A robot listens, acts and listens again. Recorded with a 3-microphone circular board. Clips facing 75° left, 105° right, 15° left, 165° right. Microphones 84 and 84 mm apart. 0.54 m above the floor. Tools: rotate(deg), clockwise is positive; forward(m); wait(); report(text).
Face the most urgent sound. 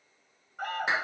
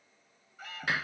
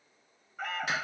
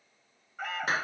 rotate(-105)
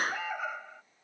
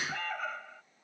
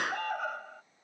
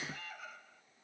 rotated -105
report("Facing the alarm.")